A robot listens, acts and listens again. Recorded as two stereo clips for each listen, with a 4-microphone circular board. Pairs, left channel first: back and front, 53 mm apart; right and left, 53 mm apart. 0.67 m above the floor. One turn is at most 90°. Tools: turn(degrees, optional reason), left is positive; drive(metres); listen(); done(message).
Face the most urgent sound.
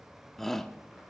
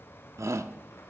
turn(degrees=90, reason="The shout: 95° left.")
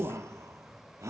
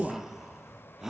turn(degrees=10, reason="The shout is now 10° left.")
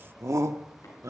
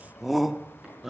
done("Found it: a shout, straight ahead, 1 to 2 m away.")